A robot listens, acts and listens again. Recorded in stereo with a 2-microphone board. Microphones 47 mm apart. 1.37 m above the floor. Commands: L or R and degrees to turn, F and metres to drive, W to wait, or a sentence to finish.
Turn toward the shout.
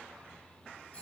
W
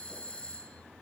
W
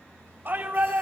R45
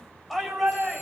Facing the shout.